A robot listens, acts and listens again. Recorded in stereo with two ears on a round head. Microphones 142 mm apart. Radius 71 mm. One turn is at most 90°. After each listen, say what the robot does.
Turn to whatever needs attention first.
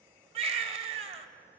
Turn 40° right.
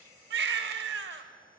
Turn 90° right.
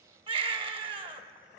Turn 35° right.
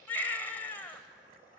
Turn 15° left.
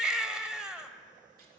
Facing the baby crying.